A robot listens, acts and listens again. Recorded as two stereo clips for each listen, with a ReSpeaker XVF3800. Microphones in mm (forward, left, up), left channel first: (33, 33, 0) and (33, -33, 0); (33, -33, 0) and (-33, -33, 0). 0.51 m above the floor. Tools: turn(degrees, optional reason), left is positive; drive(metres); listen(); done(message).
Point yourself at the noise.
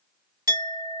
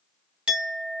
turn(degrees=-105, reason="The clink: 105° right.")
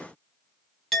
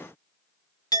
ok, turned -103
done("Facing the clink.")